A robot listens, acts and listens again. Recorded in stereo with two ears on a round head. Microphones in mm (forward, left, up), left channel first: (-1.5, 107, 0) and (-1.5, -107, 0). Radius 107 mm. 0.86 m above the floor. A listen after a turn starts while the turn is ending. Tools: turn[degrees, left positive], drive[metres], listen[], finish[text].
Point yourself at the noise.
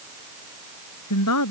Action: turn[90]
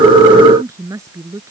Thought: So it is at 15° right.
Action: turn[-15]
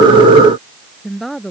Action: finish[Found it: a woman speaking, straight ahead.]